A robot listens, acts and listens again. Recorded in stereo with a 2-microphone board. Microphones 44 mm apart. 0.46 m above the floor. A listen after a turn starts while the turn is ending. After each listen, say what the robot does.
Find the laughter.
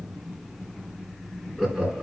Turn 25° left.
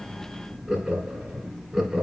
Facing the laughter.